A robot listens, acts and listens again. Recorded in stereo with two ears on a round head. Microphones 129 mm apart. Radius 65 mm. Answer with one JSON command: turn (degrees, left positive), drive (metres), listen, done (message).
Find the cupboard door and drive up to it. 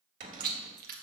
{"turn": -55}
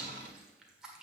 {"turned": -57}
{"listen": true}
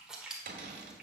{"turn": -65}
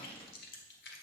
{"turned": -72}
{"turn": 10}
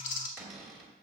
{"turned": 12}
{"drive": 1.0}
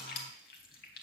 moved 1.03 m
{"listen": true}
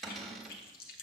{"drive": 1.0}
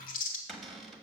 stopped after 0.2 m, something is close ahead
{"done": "I am next to the cupboard door."}